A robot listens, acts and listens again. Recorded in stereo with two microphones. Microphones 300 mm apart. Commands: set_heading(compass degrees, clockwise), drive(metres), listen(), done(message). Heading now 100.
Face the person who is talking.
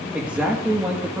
set_heading(130)
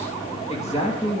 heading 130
set_heading(105)
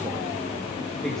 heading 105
listen()
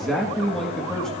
done("Found it: a man speaking, straight ahead.")